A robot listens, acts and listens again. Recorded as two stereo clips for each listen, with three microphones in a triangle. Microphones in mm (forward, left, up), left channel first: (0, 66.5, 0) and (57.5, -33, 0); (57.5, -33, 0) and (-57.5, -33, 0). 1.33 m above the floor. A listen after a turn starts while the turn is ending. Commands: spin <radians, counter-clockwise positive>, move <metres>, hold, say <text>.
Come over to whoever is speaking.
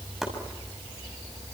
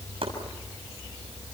hold
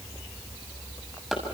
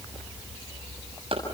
hold
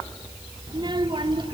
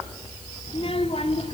spin -0.35
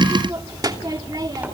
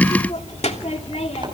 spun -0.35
move 1.0
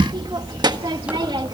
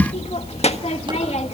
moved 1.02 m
spin -0.17
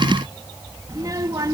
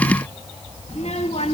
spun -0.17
move 1.0
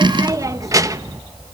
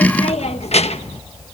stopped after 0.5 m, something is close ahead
say I am next to the child speaking.